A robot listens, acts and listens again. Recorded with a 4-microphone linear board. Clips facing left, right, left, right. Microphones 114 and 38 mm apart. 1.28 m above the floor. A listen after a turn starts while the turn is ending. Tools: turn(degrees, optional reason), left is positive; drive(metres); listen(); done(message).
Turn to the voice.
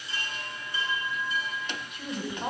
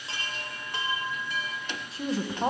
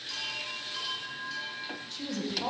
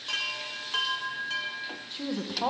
turn(degrees=-30, reason="The woman speaking: about 30° right or 150° right.")
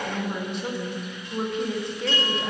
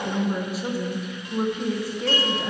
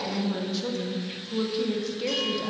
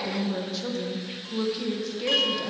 done("Facing the woman speaking.")